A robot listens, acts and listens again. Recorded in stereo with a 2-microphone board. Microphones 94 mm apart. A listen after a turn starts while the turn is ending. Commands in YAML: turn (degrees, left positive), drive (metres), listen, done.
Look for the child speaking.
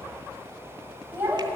turn: -20
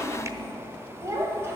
turn: -25
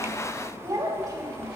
turn: -35
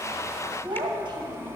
turn: -125
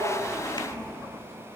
listen: true
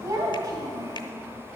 turn: -40
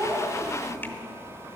done: "Facing the child speaking."